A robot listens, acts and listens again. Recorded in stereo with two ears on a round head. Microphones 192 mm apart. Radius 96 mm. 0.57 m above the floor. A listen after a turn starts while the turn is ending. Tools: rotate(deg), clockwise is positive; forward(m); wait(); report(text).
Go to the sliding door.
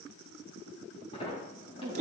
rotate(-25)
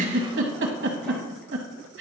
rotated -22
wait()
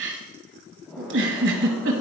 forward(1.0)
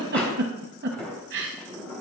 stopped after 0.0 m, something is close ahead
report("Something is in my way. I am facing the sliding door but have not reached it.")